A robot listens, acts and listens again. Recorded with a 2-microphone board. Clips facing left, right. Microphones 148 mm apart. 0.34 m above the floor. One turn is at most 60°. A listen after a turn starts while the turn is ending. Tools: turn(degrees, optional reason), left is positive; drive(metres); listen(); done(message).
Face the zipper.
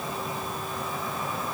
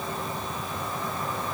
listen()
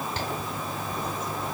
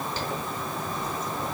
turn(degrees=60, reason="The zipper: about 60° left or 120° left.")
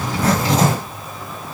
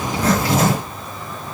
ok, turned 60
turn(degrees=30, reason="So it is at 30° left.")
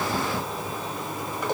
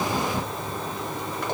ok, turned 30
turn(degrees=15, reason="The zipper is now 15° left.")
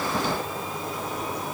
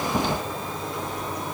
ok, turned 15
listen()
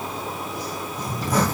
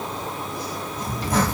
done("Found it: a zipper, straight ahead, 2 to 4 m away.")